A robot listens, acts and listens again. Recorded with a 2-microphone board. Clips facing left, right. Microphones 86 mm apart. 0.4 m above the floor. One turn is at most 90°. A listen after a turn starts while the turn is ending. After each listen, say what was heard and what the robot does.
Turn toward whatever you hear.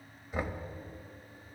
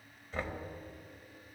Turn 30° left.
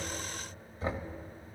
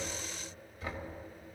So it is at 140° left. Turn 90° left.
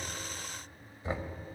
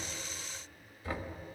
The knocking is now 30° left. Turn 30° left.
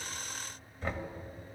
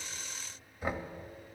The knocking is now 15° right. Turn 15° right.
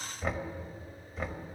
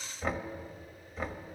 Facing the knocking.